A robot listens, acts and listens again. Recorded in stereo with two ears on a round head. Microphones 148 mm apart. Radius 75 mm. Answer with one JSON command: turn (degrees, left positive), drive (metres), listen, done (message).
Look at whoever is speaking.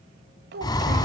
{"turn": -70}
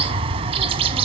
{"listen": true}
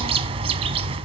{"listen": true}
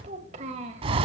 {"turn": -40}
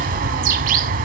{"listen": true}
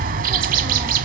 {"listen": true}
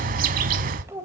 {"turn": -15}
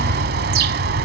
{"listen": true}
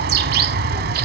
{"listen": true}
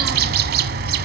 {"done": "Facing where the child speaking came from. I can't hear it now."}